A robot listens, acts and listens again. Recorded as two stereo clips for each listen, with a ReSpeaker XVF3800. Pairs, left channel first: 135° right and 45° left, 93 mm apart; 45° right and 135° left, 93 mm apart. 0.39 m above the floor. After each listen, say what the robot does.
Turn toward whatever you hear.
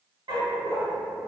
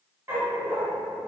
Turn 70° left.
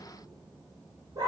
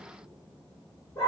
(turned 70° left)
Facing the dog barking, under 1 m away.